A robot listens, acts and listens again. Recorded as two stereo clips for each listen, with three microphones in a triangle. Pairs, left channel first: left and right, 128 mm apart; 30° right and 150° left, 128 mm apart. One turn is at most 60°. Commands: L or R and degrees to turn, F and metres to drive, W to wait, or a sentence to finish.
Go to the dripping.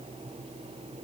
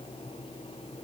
W
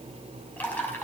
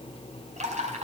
L60
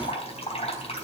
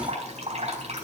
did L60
L60
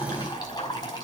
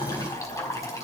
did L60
L35
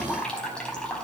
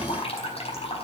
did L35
F1.0
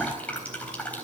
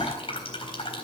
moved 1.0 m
L10
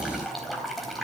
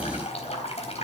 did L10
F1.0
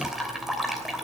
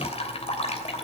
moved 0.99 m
F1.0
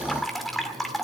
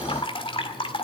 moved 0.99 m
F1.0
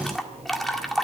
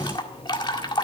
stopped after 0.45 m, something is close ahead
Arrived at the dripping, straight ahead.